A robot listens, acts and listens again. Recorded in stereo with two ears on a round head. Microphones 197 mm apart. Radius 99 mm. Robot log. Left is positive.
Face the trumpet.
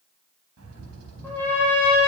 cmd yaw +30
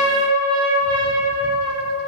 note: So it is at 25° right.
cmd yaw -25
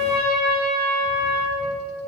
end: Facing the trumpet.